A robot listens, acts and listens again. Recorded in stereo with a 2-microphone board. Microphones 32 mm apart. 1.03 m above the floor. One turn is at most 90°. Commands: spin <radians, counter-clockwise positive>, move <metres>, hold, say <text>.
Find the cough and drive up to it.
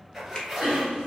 spin -1.13
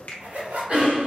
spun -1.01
spin -0.87
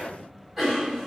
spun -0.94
move 1.0
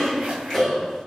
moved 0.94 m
move 1.0
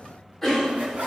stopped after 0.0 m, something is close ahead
spin 0.26
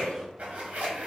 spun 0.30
say Arrived at the cough, straight ahead.